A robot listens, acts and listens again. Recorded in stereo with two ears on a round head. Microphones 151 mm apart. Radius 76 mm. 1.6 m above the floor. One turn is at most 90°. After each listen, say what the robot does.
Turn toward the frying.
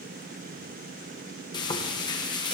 Turn 25° left.
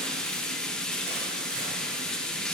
Found it: frying, straight ahead.